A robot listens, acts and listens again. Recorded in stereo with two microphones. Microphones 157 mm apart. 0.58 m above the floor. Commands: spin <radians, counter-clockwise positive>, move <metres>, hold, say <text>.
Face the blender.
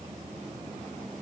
hold
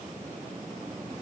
hold
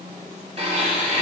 spin -0.70
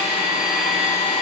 say Found it: a blender, straight ahead.